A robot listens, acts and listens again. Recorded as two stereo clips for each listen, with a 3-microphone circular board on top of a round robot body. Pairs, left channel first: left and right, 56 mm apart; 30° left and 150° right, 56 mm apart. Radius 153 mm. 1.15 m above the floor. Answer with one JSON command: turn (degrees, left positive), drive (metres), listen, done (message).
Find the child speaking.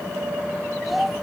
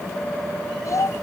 {"done": "Found it: a child speaking, straight ahead."}